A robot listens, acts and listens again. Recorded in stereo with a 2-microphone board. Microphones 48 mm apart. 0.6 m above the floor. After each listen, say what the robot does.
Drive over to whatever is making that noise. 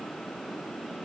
Keep listening.
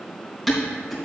Turn 30° left.
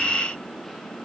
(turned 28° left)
Keep listening.
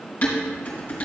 Turn 145° left.
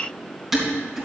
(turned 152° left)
Turn 10° right.
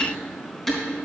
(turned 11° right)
Drive 1.0 m forward.
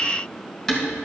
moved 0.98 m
Drive 1.0 m forward.
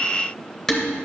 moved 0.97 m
Turn 10° left.
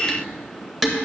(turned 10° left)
Drive 1.0 m forward.
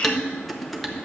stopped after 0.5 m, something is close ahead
I am next to the dishes clattering.